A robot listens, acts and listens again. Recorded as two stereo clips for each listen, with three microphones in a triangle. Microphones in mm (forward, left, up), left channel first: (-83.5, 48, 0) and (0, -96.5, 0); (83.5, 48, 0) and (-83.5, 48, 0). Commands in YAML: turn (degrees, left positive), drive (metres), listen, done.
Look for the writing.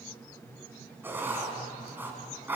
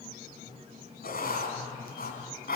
turn: 15
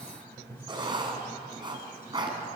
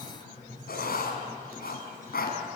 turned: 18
done: "Facing the writing, 2 to 4 m away."